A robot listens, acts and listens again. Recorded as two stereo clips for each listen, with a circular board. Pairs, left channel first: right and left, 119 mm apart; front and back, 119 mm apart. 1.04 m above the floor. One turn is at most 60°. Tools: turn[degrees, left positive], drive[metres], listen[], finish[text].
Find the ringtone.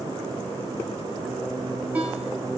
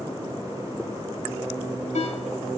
Thought: The ringtone: 10° left.
Action: turn[10]
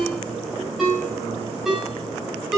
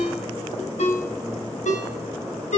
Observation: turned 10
Action: finish[Found it: a ringtone, straight ahead.]